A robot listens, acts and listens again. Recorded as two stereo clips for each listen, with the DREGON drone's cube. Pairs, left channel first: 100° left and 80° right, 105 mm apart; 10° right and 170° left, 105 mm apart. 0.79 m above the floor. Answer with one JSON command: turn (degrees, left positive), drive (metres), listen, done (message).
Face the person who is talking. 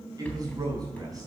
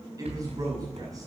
{"turn": -135}
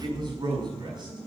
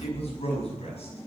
{"turn": -30}
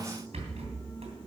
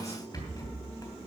{"listen": true}
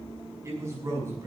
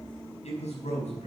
{"turn": -15}
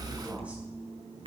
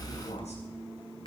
{"listen": true}
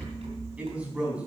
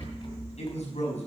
{"done": "Found it: a man speaking, straight ahead."}